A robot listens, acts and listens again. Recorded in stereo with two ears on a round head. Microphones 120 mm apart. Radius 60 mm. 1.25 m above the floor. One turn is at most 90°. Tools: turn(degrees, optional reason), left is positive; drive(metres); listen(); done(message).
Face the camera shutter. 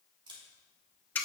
turn(degrees=-40, reason="The camera shutter: about 40° right or 140° right.")
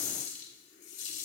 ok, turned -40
listen()
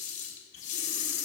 listen()
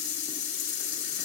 done("I heard a camera shutter, but can't make it out now. It was about straight ahead or 100° right.")